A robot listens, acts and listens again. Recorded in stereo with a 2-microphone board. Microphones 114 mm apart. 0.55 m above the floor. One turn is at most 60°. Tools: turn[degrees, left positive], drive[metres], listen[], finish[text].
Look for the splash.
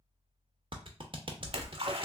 Thought: The splash: about 60° right or 120° right.
Action: turn[-60]
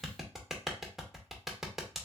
Action: listen[]
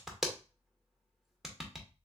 Action: finish[I heard a splash, but can't make it out now. It was about straight ahead or 60° right.]